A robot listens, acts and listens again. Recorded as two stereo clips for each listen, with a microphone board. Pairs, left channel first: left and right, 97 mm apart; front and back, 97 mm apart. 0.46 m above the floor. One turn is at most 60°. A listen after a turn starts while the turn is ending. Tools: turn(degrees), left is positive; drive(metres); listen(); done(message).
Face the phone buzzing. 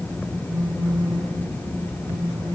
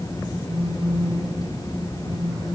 turn(degrees=-60)
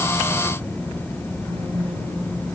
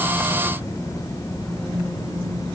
turn(degrees=-60)
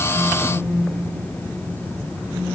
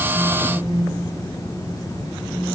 turn(degrees=-15)
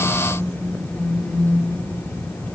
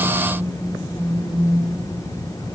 done("Facing the phone buzzing, 2 to 4 m away.")